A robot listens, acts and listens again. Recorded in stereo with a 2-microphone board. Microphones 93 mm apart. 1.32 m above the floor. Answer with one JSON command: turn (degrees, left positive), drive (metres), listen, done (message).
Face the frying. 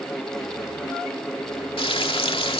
{"turn": 90}
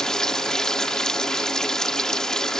{"done": "Facing the frying."}